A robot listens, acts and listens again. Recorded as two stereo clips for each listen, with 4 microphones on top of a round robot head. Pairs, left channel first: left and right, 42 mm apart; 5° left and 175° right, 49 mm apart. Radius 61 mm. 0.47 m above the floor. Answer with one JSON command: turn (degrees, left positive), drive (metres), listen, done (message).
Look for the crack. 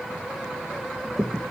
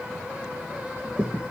{"turn": -135}
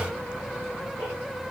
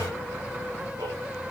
{"done": "I heard a crack from this way, but can't make it out now."}